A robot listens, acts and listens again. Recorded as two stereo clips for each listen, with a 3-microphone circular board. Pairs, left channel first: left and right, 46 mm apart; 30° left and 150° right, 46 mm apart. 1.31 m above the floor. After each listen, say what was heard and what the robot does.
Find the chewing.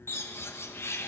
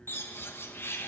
Keep listening.
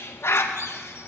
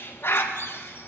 Keep listening.
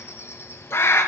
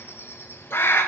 I can't make out chewing, only a bird.